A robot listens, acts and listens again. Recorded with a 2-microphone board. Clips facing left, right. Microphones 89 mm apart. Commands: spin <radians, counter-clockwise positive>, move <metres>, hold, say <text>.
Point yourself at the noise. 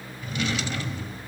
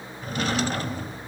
spin -0.79
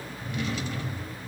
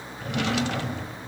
spin -1.66
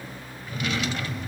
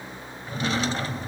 spin -0.61
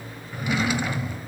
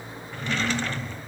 spin 0.17
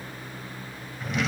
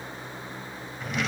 say Found it: a drawer, straight ahead, under 1 m away.